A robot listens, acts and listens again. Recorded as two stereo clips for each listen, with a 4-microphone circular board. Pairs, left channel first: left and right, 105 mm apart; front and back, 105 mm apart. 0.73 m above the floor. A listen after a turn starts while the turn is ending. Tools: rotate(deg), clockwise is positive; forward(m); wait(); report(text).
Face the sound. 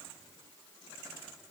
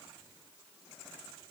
wait()
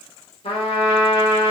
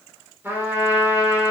rotate(-110)
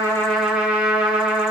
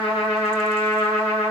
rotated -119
rotate(10)
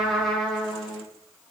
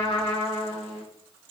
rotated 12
report("Facing the trumpet, 1 to 2 m away.")